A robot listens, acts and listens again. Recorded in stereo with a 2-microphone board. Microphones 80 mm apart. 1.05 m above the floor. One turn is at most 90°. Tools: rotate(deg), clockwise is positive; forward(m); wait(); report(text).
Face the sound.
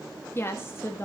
rotate(-35)
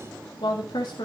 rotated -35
rotate(-90)
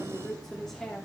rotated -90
rotate(-10)
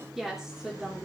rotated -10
report("Facing the woman speaking, 2 to 4 m away.")